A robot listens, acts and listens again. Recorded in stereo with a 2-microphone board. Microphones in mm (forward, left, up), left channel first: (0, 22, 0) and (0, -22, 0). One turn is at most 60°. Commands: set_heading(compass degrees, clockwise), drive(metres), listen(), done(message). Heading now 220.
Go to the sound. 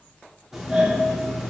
set_heading(250)
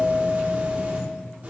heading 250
set_heading(310)
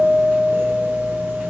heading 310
set_heading(10)
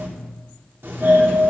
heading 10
set_heading(70)
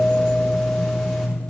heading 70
set_heading(60)
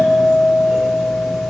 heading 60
set_heading(50)
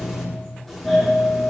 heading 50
drive(1.0)
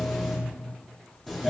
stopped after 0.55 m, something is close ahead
done("Blocked. The doorbell is further on, straight ahead.")